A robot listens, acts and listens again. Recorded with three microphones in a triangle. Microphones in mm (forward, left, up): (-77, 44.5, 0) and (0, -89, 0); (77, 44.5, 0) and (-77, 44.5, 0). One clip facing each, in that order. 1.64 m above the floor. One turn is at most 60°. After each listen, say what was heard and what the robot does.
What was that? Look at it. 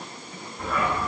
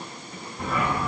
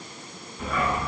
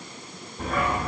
The dog barking: 130° right. Turn 60° right.
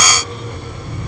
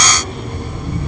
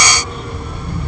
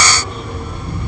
The dog barking is now 85° right. Turn 60° right.
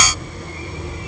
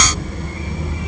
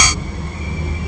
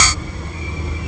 The dog barking is now 35° right. Turn 35° right.
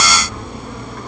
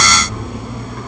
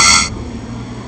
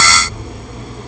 The dog barking is now 25° left. Turn 25° left.
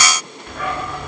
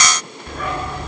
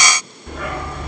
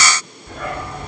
Found it: a dog barking, straight ahead, over 4 m away.